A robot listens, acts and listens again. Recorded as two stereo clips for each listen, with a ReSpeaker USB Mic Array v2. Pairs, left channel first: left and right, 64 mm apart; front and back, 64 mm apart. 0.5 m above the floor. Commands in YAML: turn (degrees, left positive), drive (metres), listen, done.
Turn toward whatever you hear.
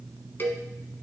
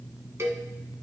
turn: 140
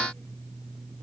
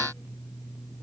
listen: true
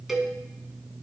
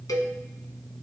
done: "Found it: a cowbell, straight ahead, 1 to 2 m away."